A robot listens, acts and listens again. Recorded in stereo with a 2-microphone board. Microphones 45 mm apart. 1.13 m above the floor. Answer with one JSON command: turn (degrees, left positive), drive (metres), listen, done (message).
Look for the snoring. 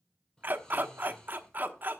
{"turn": 30}
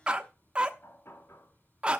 {"listen": true}
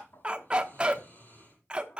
{"turn": 140}
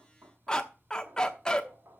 {"listen": true}
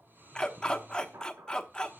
{"turn": -45}
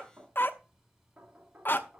{"listen": true}
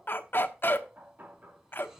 {"done": "Facing the snoring."}